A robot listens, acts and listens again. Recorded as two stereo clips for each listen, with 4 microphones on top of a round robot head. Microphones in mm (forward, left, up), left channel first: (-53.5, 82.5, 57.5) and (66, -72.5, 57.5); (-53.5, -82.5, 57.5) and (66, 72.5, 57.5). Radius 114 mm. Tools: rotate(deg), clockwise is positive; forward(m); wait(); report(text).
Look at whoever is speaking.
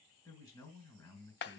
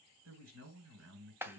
rotate(-55)
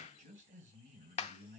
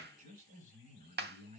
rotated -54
report("Facing the man speaking, 2 to 4 m away.")